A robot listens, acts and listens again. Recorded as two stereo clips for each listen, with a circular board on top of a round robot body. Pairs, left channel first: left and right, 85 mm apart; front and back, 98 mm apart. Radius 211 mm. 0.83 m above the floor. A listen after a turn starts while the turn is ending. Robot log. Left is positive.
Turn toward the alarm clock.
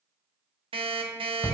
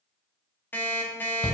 note: The alarm clock: 75° right.
cmd yaw -75
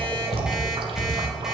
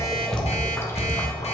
cmd idle
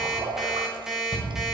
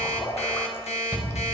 end: Facing the alarm clock, 1 to 2 m away.